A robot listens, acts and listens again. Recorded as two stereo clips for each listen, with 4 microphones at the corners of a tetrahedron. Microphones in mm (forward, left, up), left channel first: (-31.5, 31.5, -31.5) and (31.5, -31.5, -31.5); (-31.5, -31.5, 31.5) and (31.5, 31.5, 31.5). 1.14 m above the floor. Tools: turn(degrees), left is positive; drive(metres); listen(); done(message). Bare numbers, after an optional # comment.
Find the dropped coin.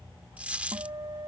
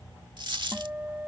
# The dropped coin: 30° left.
turn(30)
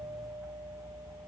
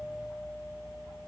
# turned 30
done("I heard a dropped coin from this way, but can't make it out now.")